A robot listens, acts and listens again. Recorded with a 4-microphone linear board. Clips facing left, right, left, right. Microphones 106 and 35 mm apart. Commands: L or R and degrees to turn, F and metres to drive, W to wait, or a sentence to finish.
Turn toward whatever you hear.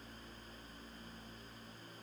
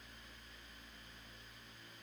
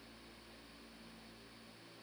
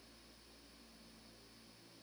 W
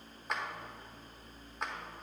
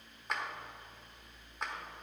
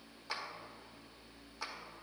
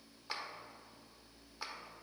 L30
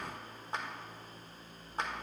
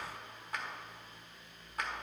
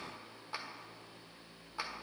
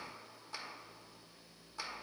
L150
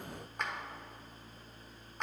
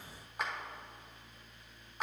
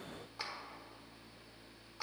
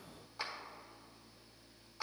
Found it: a clap, straight ahead.